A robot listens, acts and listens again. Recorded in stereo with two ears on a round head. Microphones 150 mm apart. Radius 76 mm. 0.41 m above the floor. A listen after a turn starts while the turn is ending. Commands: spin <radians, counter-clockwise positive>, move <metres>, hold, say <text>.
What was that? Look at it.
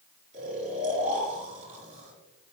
spin -0.79
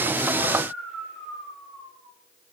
say Facing the snoring, over 4 m away.